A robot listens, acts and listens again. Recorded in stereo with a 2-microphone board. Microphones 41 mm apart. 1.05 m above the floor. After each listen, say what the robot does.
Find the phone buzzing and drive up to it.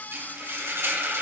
Keep listening.
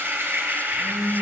Turn 75° left.
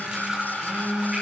Turn 25° left.
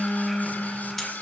Drive 1.0 m forward.
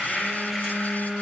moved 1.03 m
Drive 1.0 m forward.
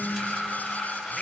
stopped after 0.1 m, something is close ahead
Keep listening.
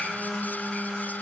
Arrived at the phone buzzing, straight ahead.